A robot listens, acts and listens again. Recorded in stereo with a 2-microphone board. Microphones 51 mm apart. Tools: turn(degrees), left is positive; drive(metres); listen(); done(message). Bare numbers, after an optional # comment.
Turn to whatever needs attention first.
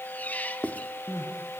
turn(90)
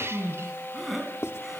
done("Found it: crying, straight ahead.")